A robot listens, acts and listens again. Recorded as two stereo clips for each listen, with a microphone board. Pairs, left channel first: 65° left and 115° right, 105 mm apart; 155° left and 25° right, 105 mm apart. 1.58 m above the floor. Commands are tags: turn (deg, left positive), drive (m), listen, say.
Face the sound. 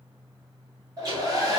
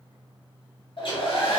<turn deg="-165"/>
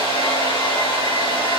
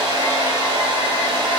<turn deg="30"/>
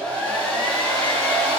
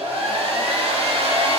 <turn deg="-10"/>
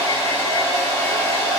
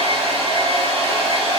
<say>Found it: a hair dryer, straight ahead.</say>